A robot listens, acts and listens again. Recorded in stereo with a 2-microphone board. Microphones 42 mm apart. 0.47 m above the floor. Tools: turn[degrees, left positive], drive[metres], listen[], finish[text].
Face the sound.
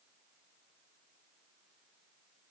Action: listen[]
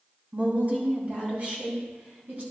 Thought: The woman speaking: about 40° right or 140° right.
Action: turn[-40]
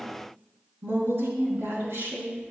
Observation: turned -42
Thought: So it is at 100° right.
Action: turn[-100]
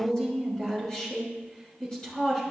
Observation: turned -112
Thought: The woman speaking is now 20° left.
Action: turn[20]
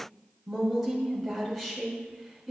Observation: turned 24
Action: finish[Facing the woman speaking, over 4 m away.]